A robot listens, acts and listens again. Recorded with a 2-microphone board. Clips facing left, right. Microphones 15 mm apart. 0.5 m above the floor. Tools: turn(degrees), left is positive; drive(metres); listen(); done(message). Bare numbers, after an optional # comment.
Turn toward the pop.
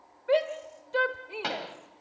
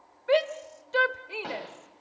# The pop: about 65° left or 115° left.
turn(65)
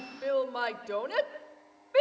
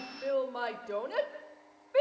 listen()
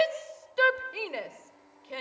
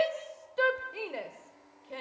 done("I heard a pop, but can't make it out now. It was about straight ahead or 50° left.")